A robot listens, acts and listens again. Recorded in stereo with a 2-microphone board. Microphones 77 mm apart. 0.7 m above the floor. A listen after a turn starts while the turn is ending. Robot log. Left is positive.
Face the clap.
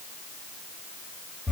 cmd idle
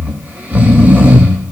cmd idle
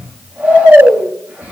end: I can't make out a clap to turn to.